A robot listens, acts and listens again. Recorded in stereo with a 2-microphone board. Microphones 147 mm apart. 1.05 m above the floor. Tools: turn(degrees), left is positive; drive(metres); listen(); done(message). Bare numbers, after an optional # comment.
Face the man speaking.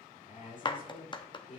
# The man speaking: about 55° left or 125° left.
turn(55)
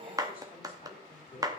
# So it is at 70° left.
turn(70)
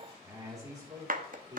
# The man speaking is now 25° right.
turn(-25)
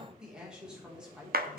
done("Facing the man speaking, 2 to 4 m away.")